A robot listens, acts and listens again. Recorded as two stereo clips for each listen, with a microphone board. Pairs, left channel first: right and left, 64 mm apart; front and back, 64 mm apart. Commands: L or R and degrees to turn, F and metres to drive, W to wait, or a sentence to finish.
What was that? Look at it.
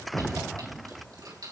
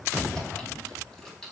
L80
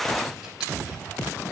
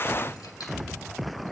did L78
W
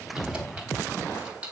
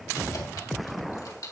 L20
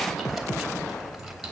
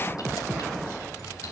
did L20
W
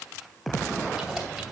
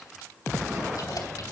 W
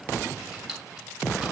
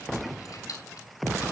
Facing the keys jangling, 2 to 4 m away.